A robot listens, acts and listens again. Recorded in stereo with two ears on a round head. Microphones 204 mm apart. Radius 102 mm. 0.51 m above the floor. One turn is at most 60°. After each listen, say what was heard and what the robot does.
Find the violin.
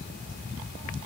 Keep listening.
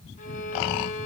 The violin: about 35° left or 145° left. Turn 35° left.
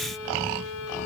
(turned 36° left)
So it is at 105° left. Turn 60° left.
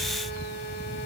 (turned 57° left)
Nothing new. It was at 50° left. Turn 50° left.
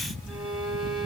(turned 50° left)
Found it: a violin, straight ahead.